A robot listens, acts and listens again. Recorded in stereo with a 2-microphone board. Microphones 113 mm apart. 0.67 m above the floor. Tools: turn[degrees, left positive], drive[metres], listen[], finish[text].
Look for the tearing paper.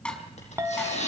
Action: turn[90]
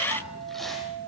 Action: listen[]
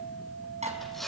Action: finish[Found it: tearing paper, straight ahead.]